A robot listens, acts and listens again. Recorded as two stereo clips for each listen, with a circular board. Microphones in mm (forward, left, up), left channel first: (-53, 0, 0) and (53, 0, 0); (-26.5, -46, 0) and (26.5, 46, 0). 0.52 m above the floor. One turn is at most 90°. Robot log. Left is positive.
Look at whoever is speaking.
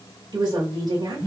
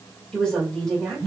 note: The woman speaking: 40° right.
cmd yaw -40
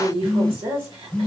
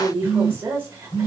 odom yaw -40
end: Facing the woman speaking.